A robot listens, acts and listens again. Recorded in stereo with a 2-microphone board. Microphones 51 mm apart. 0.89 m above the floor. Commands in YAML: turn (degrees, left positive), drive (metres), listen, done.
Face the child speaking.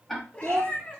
turn: -65
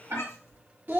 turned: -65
turn: -40
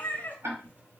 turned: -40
listen: true
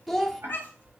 done: "Facing the child speaking, under 1 m away."